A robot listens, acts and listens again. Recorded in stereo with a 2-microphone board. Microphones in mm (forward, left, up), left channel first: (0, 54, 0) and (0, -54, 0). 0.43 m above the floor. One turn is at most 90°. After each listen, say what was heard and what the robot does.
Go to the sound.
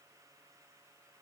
Keep listening.
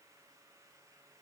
Keep listening.
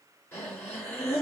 The breathing: about 25° left or 155° left. Turn 25° left.
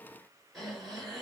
Drive 1.0 m forward.
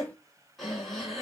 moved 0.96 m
Drive 1.0 m forward.
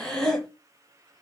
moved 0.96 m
Drive 1.0 m forward.
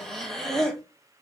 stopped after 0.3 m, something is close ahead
I am next to the breathing.